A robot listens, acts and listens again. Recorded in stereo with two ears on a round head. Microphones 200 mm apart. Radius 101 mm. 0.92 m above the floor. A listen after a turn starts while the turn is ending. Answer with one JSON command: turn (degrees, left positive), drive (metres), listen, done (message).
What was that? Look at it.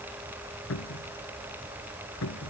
{"turn": 70}
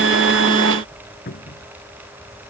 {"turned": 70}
{"turn": 40}
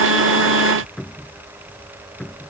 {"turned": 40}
{"done": "Facing the cupboard door."}